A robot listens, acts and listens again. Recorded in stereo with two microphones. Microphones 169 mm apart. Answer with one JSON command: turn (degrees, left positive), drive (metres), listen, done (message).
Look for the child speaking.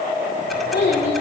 {"turn": 90}
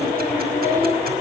{"turn": 15}
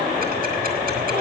{"listen": true}
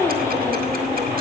{"listen": true}
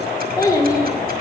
{"turn": 25}
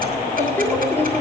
{"turn": 15}
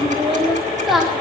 {"done": "Found it: a child speaking, straight ahead."}